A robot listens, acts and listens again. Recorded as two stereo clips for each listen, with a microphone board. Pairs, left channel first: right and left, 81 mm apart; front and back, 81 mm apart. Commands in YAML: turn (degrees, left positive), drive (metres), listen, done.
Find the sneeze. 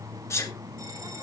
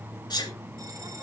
turn: -35
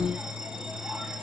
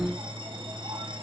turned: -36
done: "Facing where the sneeze came from. I can't hear it now."